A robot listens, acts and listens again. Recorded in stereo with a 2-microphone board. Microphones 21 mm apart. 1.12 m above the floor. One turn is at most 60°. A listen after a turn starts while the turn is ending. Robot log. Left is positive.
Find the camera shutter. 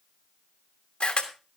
note: The camera shutter: about 60° left or 120° left.
cmd yaw +60
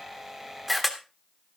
end: Facing the camera shutter, 1 to 2 m away.